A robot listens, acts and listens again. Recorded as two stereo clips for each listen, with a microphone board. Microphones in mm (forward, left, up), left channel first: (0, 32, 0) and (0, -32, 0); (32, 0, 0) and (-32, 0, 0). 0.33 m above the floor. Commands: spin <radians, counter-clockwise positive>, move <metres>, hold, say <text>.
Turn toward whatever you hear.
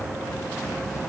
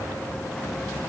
hold
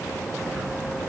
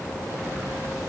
hold
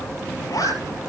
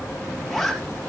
spin 1.57
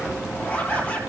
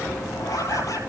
spin 0.52
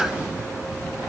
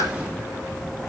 spin -0.17
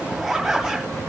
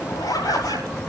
say Facing the zipper, over 4 m away.